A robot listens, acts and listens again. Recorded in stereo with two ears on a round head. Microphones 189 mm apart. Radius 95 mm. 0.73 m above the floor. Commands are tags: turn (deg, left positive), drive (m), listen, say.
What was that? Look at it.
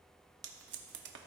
<turn deg="-55"/>
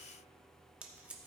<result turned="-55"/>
<say>Found it: tape being pulled, straight ahead.</say>